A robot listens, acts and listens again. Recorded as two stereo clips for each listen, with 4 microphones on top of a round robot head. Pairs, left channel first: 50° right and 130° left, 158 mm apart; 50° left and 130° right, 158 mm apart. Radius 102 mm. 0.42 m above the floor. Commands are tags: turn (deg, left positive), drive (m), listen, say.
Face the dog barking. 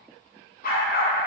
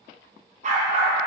<turn deg="-80"/>
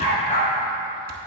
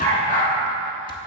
<say>Facing the dog barking.</say>